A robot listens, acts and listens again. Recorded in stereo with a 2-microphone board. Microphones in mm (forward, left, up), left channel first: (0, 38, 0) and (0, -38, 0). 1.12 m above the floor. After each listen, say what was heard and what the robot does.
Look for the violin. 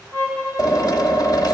The violin: about 20° left or 160° left. Turn 20° left.
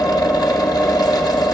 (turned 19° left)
Keep listening.
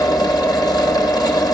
Keep listening.
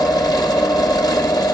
I heard a violin, but can't make it out now. It was about straight ahead or 140° left.